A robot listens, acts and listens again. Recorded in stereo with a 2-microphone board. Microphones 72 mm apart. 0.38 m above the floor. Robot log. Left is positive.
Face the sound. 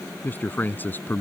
note: The man speaking: about 25° left or 155° left.
cmd yaw +25
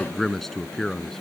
end: Found it: a man speaking, straight ahead.